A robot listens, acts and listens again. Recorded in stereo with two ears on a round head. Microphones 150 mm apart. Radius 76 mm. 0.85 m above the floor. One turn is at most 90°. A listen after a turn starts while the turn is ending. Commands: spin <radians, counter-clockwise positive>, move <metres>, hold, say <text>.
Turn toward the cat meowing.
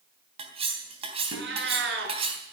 spin -1.57
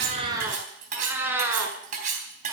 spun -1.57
spin -0.26
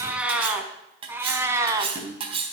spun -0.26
spin -0.35
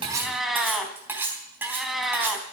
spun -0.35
say Found it: a cat meowing, straight ahead, 1 to 2 m away.